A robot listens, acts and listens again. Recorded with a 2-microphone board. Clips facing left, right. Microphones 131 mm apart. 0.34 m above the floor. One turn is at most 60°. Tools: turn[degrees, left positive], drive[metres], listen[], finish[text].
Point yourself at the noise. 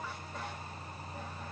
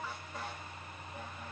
Action: listen[]
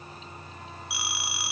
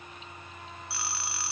Action: turn[30]
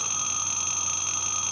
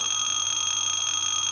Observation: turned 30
Thought: So it is at 135° left.
Action: turn[60]
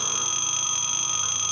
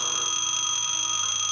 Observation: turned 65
Thought: The phone ringing is now 70° left.
Action: turn[60]
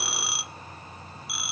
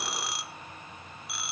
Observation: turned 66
Action: finish[Found it: a phone ringing, straight ahead, 1 to 2 m away.]